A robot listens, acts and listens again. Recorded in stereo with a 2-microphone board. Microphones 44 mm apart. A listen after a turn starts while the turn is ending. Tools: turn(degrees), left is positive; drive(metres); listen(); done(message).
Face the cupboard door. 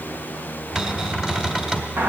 turn(degrees=-20)
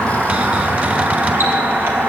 listen()
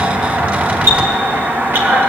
listen()
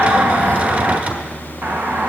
done("I heard a cupboard door, but can't make it out now. It was about straight ahead or 140° right.")